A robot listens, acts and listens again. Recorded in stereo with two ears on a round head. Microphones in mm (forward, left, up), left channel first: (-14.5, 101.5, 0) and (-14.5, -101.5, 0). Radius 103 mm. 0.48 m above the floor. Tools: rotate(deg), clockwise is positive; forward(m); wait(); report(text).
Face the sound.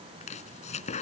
rotate(-30)
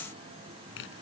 rotate(-120)
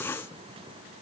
rotate(-10)
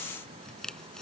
report("Facing the chopping.")